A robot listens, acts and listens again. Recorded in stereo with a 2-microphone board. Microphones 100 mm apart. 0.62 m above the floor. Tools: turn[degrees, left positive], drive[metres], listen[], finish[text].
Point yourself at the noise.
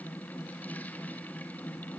Action: listen[]
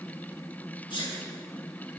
Thought: The sneeze: about 55° left or 125° left.
Action: turn[55]
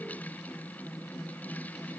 Action: listen[]
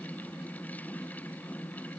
Action: finish[I heard a sneeze, but can't make it out now. It was about straight ahead or 70° left.]